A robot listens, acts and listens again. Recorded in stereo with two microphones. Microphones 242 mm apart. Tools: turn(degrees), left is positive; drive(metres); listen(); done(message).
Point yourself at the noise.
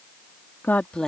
turn(degrees=30)
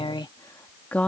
turn(degrees=30)
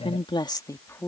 turn(degrees=30)
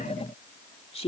turn(degrees=155)
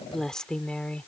done("Facing the woman speaking.")